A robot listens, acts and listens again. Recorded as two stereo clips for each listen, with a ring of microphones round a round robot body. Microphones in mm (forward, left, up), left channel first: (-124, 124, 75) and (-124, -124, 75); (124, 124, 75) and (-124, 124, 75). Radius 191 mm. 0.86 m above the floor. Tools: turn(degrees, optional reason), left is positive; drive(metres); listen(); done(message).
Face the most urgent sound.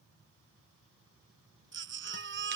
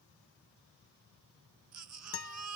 turn(degrees=-130, reason="The baby crying: 130° right.")
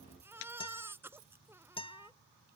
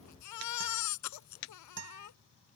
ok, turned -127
done("Found it: a baby crying, straight ahead.")